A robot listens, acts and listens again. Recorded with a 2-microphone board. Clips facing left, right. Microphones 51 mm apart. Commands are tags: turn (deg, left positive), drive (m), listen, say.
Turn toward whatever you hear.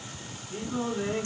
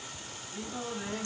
<turn deg="50"/>
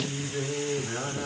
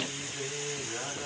<turn deg="70"/>
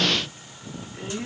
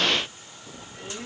<turn deg="15"/>
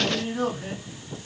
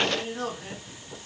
<turn deg="10"/>
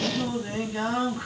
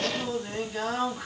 <say>Found it: singing, straight ahead, 2 to 4 m away.</say>